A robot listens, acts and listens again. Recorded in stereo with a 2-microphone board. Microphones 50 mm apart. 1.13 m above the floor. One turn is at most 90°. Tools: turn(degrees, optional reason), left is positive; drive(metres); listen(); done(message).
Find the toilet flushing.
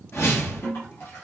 turn(degrees=65, reason="The toilet flushing: about 65° left or 115° left.")
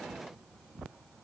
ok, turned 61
listen()
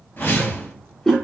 turn(degrees=10, reason="So it is at 10° left.")
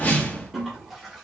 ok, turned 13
done("Found it: a toilet flushing, straight ahead, 1 to 2 m away.")